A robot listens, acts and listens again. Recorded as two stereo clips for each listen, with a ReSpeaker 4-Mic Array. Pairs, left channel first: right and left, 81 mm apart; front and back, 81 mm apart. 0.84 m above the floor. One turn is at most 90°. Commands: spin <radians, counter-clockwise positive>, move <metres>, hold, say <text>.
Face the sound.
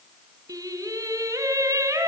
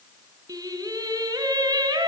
spin 1.57
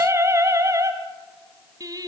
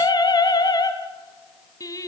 spin 0.87
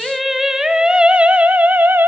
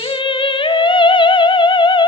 spin 0.44
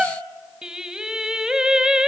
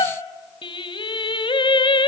spin 0.17
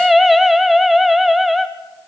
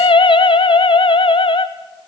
say Found it: singing, straight ahead, 1 to 2 m away.